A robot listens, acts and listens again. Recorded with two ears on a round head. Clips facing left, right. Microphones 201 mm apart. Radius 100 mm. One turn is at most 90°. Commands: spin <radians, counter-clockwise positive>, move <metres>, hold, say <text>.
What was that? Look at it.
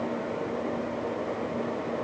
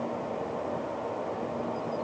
hold
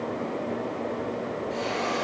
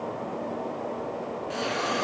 spin -1.22
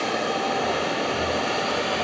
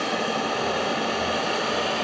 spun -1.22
spin -0.70
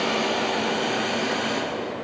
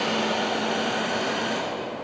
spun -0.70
spin -0.17
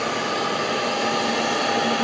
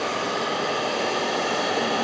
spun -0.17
say Facing the hiss.